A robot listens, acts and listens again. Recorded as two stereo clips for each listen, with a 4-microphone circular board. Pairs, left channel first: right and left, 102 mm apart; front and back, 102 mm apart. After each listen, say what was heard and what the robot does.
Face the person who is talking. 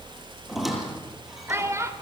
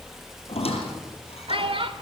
The child speaking: 150° left. Turn 150° left.
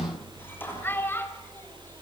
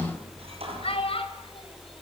The child speaking is now 20° right. Turn 20° right.
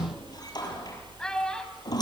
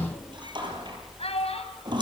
Facing the child speaking, over 4 m away.